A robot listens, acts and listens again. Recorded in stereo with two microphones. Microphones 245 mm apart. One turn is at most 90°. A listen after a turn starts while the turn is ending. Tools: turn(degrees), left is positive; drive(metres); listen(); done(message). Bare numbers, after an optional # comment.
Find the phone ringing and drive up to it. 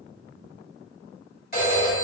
# The phone ringing: about 40° left or 140° left.
turn(40)
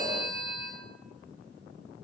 # So it is at 100° left.
turn(90)
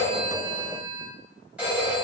drive(1.0)
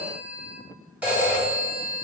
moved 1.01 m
drive(1.0)
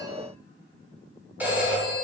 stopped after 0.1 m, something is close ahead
done("Arrived at the phone ringing, straight ahead.")